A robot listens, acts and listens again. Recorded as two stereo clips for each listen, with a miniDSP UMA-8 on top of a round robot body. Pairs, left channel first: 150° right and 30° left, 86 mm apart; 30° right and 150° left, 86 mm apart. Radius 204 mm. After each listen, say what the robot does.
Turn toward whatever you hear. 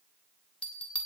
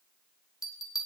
Turn 75° right.
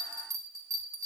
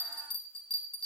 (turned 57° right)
Turn 20° right.
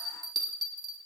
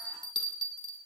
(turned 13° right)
Found it: a bell, straight ahead.